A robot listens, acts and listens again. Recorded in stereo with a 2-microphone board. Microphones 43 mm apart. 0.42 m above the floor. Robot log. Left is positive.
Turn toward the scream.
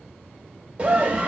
note: The scream: about 30° right or 150° right.
cmd yaw -30
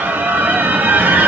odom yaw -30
note: So it is at 115° right.
cmd yaw -115
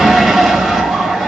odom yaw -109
end: Found it: a scream, straight ahead.